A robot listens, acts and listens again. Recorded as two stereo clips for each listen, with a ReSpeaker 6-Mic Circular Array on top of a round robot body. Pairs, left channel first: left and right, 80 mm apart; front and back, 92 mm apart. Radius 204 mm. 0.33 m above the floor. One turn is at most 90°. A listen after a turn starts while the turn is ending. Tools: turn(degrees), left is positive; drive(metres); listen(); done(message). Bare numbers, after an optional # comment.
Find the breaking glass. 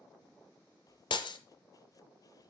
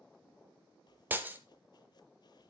# The breaking glass: 110° left.
turn(90)
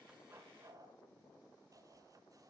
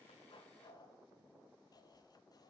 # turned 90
# Nothing new. It was at 20° left.
turn(20)
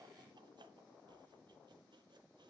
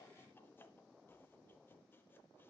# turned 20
done("I heard breaking glass from this way, but can't make it out now.")